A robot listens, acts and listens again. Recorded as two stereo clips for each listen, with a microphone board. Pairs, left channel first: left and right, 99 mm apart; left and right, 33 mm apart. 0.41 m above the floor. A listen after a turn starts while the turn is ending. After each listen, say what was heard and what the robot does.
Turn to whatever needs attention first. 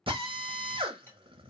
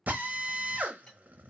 Keep listening.
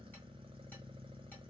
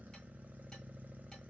Keep listening.
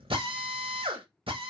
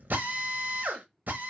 I can't make out anything urgent, only a drill.